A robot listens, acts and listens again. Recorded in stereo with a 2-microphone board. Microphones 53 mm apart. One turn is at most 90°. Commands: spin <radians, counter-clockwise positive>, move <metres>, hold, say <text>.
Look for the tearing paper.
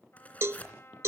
spin 0.52
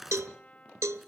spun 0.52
say Found it: tearing paper, straight ahead.